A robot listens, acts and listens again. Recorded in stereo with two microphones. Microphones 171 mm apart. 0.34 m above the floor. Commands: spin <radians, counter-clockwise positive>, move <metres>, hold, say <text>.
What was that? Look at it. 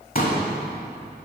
spin 0.96
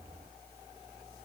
hold
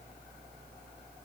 say I heard a pop, but can't make it out now. It was about straight ahead or 70° left.